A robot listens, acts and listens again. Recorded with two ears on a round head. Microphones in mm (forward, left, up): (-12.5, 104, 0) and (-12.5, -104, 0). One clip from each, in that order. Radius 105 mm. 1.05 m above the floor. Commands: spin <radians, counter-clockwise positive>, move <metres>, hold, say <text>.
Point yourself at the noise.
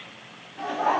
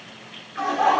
spin -1.31
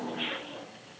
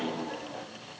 hold
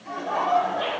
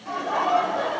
spin -0.17
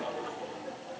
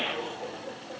say Found it: laughter, straight ahead, 2 to 4 m away.